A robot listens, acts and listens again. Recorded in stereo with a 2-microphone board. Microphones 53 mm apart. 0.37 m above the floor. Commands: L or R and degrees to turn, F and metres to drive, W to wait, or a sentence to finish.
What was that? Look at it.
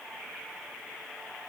W
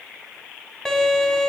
L30
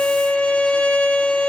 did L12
L160
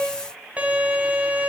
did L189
R30
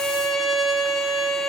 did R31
Found it: a violin, straight ahead, 1 to 2 m away.